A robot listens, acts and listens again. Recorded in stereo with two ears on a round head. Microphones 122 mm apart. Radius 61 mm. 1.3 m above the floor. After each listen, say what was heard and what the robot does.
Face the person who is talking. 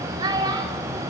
The child speaking: about 30° right or 150° right. Turn 30° right.
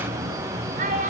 So it is at 120° right. Turn 120° right.
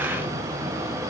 Keep listening.
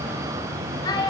The child speaking is now 30° left. Turn 30° left.
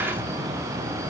Keep listening.
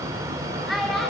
Found it: a child speaking, straight ahead.